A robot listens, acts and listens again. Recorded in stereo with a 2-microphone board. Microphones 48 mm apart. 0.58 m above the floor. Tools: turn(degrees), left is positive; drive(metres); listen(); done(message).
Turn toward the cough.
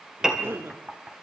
turn(degrees=-55)
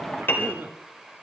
turn(degrees=-60)
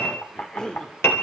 turn(degrees=15)
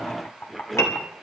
done("Facing the cough.")